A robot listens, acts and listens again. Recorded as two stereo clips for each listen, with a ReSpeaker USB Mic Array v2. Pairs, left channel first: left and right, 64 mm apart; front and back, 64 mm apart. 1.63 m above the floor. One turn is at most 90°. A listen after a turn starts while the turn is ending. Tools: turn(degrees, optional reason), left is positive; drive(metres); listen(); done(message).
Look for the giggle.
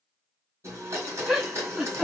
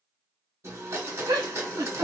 turn(degrees=-90, reason="The giggle: 175° right.")
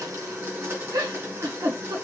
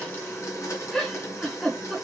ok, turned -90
turn(degrees=-80, reason="The giggle is now 80° right.")
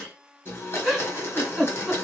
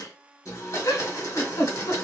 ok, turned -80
done("Found it: a giggle, straight ahead, under 1 m away.")